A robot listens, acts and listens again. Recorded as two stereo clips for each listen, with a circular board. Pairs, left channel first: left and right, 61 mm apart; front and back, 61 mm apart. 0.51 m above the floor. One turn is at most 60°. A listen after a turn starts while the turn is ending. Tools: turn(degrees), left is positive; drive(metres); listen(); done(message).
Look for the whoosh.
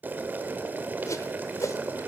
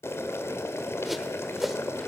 turn(degrees=60)
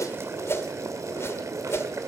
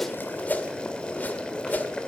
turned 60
turn(degrees=55)
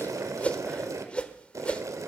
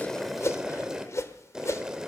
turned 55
turn(degrees=25)
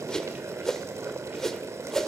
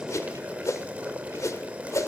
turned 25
turn(degrees=10)
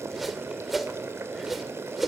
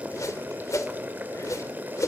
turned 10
done("Facing the whoosh, 1 to 2 m away.")